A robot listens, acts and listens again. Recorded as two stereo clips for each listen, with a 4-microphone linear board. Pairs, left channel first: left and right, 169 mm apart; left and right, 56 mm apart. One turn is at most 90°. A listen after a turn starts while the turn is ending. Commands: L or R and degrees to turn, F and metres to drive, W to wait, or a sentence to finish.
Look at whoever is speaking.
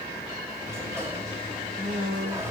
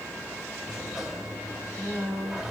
R50
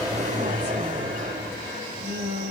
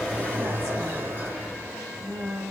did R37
R90
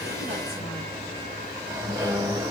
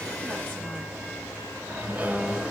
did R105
L15
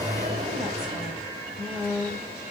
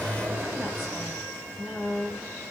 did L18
Facing the woman speaking.